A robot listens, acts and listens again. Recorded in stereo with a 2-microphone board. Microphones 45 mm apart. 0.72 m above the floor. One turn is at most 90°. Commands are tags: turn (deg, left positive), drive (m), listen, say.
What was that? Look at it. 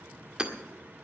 <turn deg="-20"/>
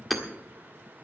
<say>Found it: hammering, straight ahead.</say>